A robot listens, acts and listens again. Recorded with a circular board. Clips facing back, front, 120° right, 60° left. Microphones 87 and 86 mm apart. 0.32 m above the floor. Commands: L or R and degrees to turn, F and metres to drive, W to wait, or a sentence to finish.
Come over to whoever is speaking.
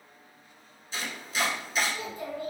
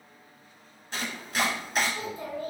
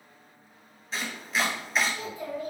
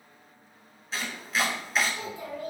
L60
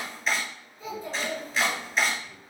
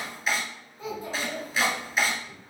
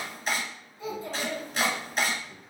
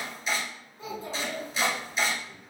F1.0
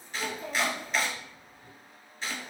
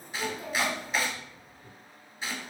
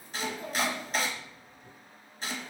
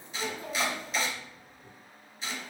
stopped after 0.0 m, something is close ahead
Something is in my way. I am facing the child speaking but have not reached it.